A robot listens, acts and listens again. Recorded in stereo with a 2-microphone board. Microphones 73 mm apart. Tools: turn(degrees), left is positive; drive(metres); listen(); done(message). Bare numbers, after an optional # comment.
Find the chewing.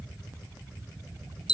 listen()
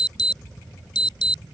listen()
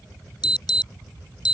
done("I can't make out chewing, only an alarm.")